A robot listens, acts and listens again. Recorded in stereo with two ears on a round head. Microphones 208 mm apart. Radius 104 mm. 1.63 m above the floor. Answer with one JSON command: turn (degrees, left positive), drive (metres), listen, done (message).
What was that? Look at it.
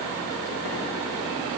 {"listen": true}
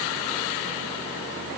{"listen": true}
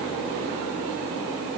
{"done": "I can't make out anything to turn to."}